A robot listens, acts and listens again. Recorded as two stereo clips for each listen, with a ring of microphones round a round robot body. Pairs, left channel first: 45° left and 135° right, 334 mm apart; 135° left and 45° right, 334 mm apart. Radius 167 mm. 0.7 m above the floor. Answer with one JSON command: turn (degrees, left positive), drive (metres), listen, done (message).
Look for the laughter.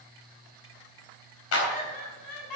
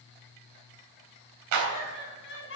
{"turn": 80}
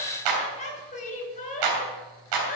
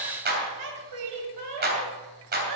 {"turn": -20}
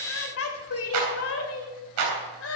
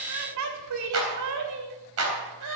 {"done": "Facing the laughter."}